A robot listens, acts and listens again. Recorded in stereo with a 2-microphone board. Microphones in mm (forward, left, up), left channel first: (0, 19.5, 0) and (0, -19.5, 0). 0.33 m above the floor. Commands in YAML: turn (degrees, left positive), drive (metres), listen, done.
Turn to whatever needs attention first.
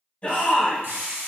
turn: 35
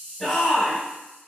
done: "Found it: a shout, straight ahead, 1 to 2 m away."